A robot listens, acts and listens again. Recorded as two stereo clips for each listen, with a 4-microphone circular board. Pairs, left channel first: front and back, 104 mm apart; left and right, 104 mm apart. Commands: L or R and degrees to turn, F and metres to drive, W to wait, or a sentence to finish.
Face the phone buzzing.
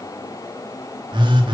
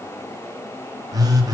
R140
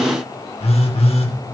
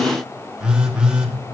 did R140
R10
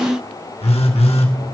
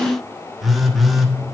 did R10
Found it: a phone buzzing, straight ahead.